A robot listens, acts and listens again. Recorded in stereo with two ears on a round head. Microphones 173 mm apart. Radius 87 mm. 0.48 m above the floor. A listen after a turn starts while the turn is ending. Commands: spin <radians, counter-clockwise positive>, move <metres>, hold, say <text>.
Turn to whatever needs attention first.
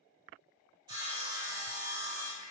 hold
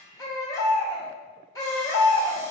spin 0.26
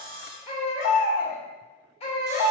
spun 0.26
spin 2.62
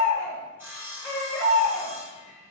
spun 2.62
spin 0.26
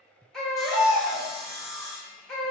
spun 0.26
say Facing the baby crying, 1 to 2 m away.